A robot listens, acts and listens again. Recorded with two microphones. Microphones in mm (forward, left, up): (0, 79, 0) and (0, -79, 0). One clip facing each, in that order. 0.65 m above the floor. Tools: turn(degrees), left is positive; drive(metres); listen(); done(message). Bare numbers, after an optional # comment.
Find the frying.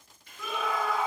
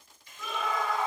# The frying: about 60° left or 120° left.
turn(60)
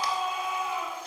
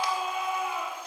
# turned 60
listen()
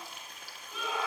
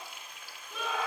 # So it is at 45° left.
turn(45)
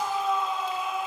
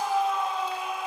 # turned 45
listen()
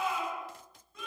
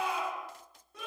listen()
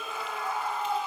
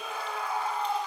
done("Facing where the frying came from. I can't hear it now.")